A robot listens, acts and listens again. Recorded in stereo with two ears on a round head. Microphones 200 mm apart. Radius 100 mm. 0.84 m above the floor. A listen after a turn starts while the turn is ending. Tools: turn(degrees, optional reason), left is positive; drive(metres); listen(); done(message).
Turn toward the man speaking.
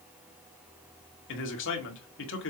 turn(degrees=55, reason="The man speaking: about 55° left or 125° left.")
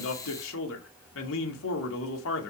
turn(degrees=65, reason="So it is at 65° left.")
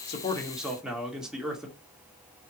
done("Facing the man speaking, 2 to 4 m away.")